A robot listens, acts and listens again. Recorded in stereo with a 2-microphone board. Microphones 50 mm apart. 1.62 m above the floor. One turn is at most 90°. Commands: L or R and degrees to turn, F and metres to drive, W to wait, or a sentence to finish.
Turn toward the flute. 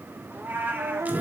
R60
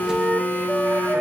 R10
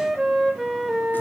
Facing the flute.